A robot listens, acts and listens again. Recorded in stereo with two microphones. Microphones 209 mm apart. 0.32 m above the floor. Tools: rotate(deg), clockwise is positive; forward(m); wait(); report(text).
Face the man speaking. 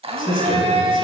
rotate(-40)
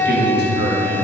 rotate(-90)
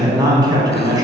rotate(20)
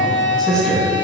report("Found it: a man speaking, straight ahead.")